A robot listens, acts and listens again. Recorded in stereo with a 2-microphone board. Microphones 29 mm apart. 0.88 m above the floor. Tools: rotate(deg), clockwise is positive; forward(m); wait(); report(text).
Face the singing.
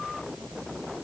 wait()
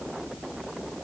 wait()
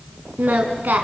rotate(90)
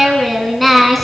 report("Facing the singing.")